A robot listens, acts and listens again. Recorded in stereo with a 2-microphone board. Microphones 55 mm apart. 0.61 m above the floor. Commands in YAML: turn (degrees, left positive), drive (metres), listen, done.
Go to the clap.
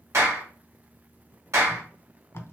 turn: -60
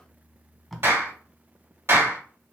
turn: -50
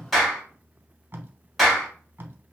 drive: 1.0
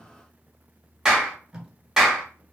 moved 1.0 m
turn: -10
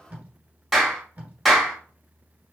drive: 1.0
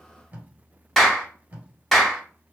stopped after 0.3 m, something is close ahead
done: "I am next to the clap."